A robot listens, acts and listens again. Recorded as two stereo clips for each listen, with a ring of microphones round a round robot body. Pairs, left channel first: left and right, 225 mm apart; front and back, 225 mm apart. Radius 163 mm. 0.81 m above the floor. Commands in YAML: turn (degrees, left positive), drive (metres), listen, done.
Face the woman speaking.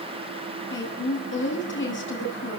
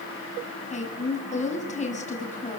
turn: 60
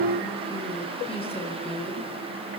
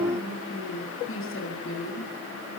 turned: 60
turn: 25
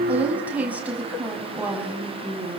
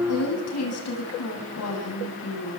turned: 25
done: "Facing the woman speaking, over 4 m away."